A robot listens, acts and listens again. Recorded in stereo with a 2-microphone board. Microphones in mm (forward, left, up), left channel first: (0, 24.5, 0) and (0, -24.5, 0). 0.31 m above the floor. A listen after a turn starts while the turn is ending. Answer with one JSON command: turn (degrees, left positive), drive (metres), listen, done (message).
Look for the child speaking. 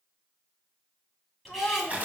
{"turn": 30}
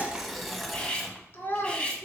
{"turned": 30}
{"turn": 120}
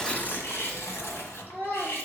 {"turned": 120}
{"turn": 40}
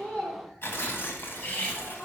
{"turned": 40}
{"done": "Facing the child speaking."}